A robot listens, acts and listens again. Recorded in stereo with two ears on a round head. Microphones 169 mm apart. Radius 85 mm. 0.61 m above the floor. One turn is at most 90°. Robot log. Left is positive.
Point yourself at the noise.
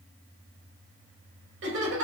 note: The laughter: about 70° right or 110° right.
cmd yaw -70
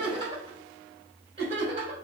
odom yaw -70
note: So it is at 35° right.
cmd yaw -35
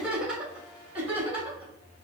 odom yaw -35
note: The laughter is now 10° right.
cmd yaw -10
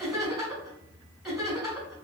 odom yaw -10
end: Found it: laughter, straight ahead.